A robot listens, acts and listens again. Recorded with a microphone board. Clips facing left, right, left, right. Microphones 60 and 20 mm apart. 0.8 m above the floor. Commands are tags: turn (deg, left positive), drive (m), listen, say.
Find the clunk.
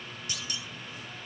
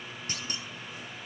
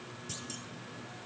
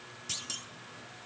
<turn deg="-45"/>
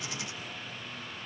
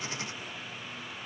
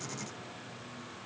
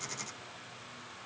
<listen/>
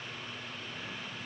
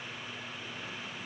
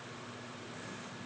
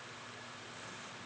<say>I heard a clunk, but can't make it out now. It was about straight ahead or 90° right.</say>